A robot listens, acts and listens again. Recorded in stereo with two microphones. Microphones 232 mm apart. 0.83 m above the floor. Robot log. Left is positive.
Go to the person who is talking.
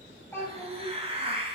cmd yaw +30
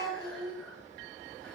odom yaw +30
note: So it is at 140° left.
cmd yaw +140
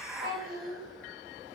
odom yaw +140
note: The child speaking is now 35° right.
cmd yaw -35
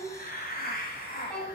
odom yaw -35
cmd fwd 1.0
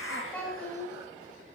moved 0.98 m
note: The child speaking is now 10° left.
cmd yaw +10
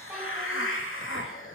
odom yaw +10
cmd idle
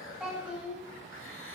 cmd fwd 1.0
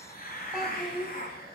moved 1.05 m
cmd fwd 1.0
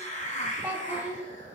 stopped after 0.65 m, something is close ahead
note: The child speaking is now 10° right.
cmd yaw -10
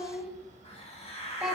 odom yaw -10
end: Arrived at the child speaking, straight ahead.